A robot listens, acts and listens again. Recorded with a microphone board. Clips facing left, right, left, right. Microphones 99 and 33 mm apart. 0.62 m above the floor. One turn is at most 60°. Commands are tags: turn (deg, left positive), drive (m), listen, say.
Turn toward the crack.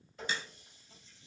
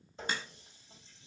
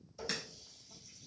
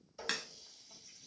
<turn deg="-50"/>
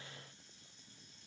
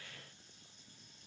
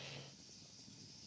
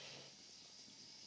<listen/>
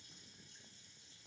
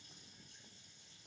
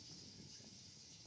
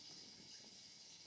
<say>I heard a crack, but can't make it out now. It was about straight ahead or 80° right.</say>